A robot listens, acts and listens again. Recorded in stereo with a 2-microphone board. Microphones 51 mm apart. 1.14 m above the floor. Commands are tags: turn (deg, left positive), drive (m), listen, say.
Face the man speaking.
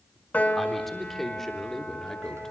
<turn deg="30"/>
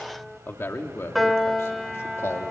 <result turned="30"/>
<turn deg="105"/>
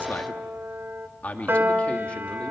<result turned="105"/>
<turn deg="30"/>
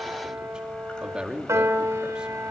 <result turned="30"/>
<turn deg="-20"/>
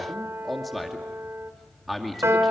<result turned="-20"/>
<say>Facing the man speaking.</say>